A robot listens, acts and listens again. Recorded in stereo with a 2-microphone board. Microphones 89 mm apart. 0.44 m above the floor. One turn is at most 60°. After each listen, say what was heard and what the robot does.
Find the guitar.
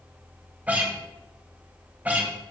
The guitar: about 15° right or 165° right. Turn 15° right.
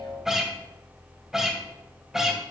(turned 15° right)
Facing the guitar, 2 to 4 m away.